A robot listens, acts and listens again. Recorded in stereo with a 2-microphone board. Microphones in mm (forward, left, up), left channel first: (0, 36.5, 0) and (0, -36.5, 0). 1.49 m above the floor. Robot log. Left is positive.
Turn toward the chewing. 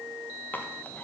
note: The chewing: about 25° left or 155° left.
cmd yaw +25
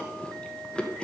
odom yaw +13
note: So it is at 15° left.
cmd yaw +15
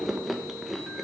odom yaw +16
end: Facing the chewing.